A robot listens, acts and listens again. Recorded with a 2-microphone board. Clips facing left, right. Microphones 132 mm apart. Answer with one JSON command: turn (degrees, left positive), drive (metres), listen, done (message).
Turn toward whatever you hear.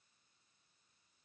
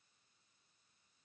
{"listen": true}
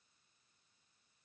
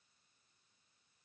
{"listen": true}
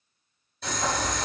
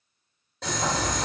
{"turn": -90}
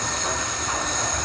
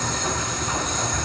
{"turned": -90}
{"done": "Found it: boiling, straight ahead."}